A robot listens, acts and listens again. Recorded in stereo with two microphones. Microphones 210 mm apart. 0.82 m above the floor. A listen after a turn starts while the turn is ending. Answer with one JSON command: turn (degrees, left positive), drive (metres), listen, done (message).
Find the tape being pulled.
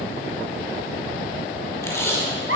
{"turn": 30}
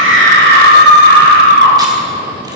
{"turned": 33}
{"listen": true}
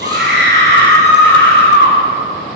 {"listen": true}
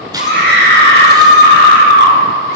{"done": "I heard tape being pulled, but can't make it out now. It was about 20° right or 135° left."}